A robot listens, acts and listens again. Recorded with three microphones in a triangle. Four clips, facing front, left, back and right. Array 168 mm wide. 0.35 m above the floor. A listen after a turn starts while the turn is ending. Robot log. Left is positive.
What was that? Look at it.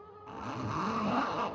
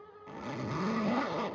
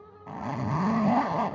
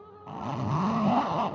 note: The zipper: 135° right.
cmd yaw -135
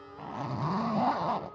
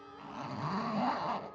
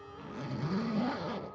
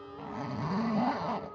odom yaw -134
end: Found it: a zipper, straight ahead.